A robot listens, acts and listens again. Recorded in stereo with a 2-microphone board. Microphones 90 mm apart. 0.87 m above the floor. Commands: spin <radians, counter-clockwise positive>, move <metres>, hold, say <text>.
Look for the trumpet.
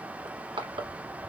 hold
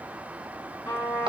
spin 0.52
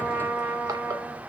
say Found it: a trumpet, straight ahead.